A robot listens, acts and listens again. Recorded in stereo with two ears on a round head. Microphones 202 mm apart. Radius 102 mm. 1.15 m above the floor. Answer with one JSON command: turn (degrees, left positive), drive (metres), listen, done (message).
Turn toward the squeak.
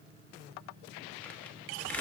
{"listen": true}
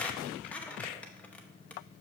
{"turn": 30}
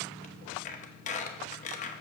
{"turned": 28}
{"turn": 145}
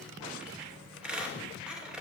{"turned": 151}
{"done": "Found it: a squeak, straight ahead."}